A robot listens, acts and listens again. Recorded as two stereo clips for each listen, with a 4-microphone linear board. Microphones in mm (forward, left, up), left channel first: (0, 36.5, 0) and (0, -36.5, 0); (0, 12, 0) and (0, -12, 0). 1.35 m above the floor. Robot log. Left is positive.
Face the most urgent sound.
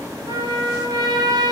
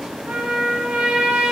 cmd idle
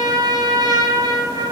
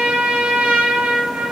cmd idle
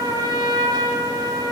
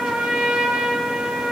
end: I can't make out anything urgent, only a trumpet.